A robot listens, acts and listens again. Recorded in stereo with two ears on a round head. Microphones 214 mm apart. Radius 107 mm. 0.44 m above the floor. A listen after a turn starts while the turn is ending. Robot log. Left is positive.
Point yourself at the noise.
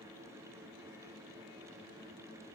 cmd idle
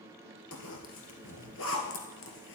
note: The zipper: about 55° left or 125° left.
cmd yaw +55
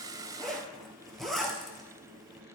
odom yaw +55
end: Found it: a zipper, straight ahead.